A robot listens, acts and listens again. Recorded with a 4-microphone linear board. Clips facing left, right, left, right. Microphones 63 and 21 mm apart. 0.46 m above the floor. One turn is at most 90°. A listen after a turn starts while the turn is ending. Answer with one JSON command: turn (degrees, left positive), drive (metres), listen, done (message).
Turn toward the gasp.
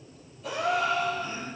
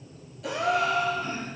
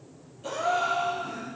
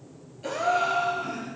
{"turn": -90}
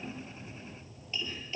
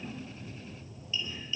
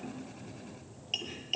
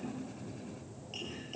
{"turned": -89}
{"done": "I heard a gasp from this way, but can't make it out now."}